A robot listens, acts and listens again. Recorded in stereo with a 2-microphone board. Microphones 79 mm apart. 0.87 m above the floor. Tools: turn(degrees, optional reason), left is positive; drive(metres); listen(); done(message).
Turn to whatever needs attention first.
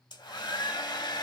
listen()
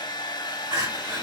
turn(degrees=-55, reason="The crying: about 55° right or 125° right.")
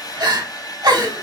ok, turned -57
turn(degrees=-60, reason="So it is at 60° right.")
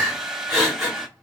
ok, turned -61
done("Found it: crying, straight ahead, 1 to 2 m away.")